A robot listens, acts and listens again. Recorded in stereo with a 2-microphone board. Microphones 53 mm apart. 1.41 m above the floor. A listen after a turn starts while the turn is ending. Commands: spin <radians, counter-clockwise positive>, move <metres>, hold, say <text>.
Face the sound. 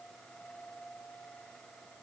hold
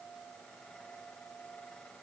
hold
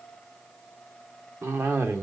spin -0.87
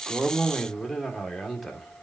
say Facing the cough.